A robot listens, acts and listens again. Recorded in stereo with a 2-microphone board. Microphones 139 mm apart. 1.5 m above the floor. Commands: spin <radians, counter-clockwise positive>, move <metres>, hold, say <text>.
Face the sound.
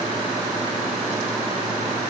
hold
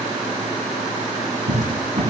spin -0.87
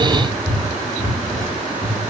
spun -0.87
say Facing the cupboard door.